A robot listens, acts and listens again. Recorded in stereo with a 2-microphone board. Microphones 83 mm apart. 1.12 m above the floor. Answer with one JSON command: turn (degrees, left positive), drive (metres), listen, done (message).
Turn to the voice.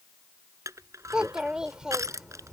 {"turn": -30}
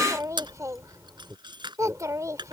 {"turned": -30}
{"turn": -140}
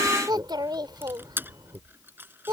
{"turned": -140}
{"turn": -55}
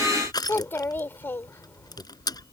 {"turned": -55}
{"turn": 25}
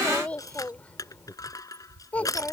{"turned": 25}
{"turn": 15}
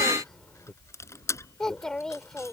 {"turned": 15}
{"done": "Facing the child speaking."}